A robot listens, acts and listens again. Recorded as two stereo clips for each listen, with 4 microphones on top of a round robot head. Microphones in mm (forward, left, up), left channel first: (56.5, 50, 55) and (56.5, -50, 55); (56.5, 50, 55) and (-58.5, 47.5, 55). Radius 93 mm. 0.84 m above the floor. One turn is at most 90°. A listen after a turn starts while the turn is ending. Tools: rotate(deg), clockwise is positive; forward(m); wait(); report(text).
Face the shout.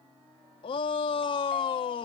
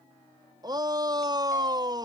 rotate(-90)
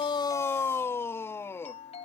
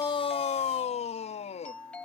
rotate(-25)
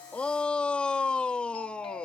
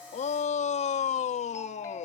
rotate(-10)
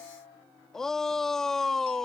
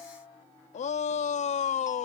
report("Facing the shout.")